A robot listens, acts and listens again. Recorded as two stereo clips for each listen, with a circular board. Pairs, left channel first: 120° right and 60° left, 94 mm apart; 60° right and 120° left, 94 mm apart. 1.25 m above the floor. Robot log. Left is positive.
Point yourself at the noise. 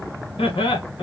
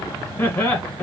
note: The laughter: 130° right.
cmd yaw -130
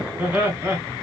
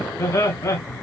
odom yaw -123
note: The laughter is now 10° right.
cmd yaw -10
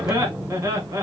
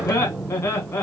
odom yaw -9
end: Facing the laughter.